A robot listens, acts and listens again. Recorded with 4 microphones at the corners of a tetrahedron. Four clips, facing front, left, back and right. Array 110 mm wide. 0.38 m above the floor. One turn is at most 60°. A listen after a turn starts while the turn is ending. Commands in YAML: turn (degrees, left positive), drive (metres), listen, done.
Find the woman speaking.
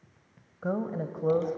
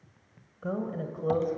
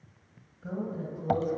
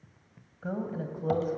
done: "Found it: a woman speaking, straight ahead."